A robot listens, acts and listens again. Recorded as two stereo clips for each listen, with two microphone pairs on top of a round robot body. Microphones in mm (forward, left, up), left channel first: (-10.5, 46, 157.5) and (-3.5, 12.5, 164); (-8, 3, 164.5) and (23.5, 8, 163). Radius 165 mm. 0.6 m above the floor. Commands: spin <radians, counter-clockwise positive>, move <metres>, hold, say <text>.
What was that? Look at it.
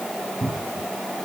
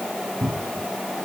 spin -0.26
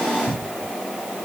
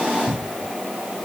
say Found it: a cupboard door, straight ahead.